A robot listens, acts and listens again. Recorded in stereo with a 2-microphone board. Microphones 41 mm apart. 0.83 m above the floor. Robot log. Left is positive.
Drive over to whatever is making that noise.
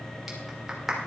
cmd yaw -30
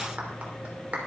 note: So it is at 145° right.
cmd yaw -145
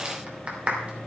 note: The clap is now 35° right.
cmd yaw -35
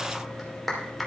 cmd fwd 1.0
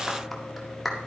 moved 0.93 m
cmd fwd 1.0
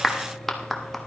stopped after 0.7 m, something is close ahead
end: Arrived at the clap, straight ahead.